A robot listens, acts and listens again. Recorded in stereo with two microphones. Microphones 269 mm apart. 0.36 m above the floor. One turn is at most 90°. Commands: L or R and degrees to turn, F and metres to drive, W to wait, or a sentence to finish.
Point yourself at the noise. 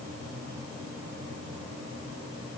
W
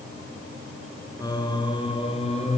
L25
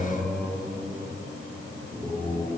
L30
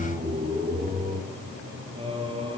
R20
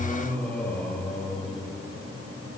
Facing the singing.